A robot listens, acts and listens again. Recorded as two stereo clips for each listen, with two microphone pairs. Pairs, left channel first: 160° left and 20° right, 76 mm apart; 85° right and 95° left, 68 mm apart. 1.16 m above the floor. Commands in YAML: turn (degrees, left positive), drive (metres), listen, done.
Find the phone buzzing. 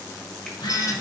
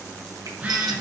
turn: 170
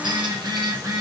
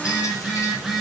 turn: 15
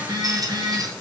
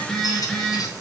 done: "Found it: a phone buzzing, straight ahead."